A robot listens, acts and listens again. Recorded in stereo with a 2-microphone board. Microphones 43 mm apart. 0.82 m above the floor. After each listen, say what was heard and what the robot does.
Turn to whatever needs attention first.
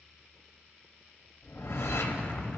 Keep listening.
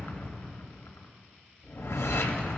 Keep listening.
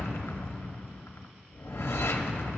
I can't make out anything urgent to turn to.